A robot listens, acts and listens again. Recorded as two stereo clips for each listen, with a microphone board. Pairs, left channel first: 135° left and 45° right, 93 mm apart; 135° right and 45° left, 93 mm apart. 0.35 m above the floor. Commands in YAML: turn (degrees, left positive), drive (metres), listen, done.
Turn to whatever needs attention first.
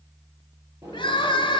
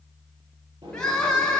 turn: 145
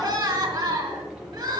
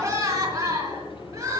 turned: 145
done: "Facing the crying, 2 to 4 m away."